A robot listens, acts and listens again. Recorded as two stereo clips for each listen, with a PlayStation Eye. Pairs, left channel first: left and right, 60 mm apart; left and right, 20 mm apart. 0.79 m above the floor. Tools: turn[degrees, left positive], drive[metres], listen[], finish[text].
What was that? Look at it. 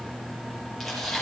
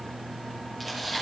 Action: turn[30]
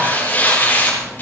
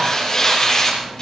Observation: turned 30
Thought: So it is at 150° left.
Action: turn[150]
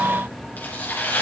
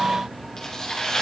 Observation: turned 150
Thought: The tearing paper is now 35° left.
Action: turn[35]
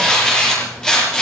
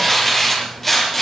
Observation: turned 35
Thought: The tearing paper is now 15° left.
Action: turn[15]
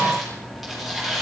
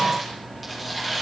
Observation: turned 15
Action: finish[Found it: tearing paper, straight ahead.]